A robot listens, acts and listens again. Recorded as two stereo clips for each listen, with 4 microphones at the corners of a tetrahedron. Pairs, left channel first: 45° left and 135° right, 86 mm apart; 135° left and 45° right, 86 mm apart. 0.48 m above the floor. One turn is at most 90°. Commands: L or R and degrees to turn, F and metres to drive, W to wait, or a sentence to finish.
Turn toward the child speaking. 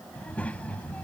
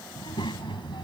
L90
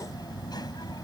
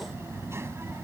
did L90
L15
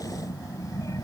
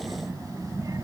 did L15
Found it: a child speaking, straight ahead.